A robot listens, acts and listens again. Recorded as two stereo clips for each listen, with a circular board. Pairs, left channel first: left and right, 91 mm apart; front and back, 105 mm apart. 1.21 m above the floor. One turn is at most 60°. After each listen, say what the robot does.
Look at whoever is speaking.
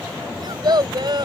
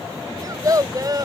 Turn 60° right.
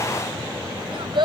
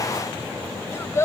Turn 60° right.
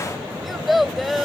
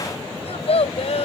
Found it: a child speaking, straight ahead.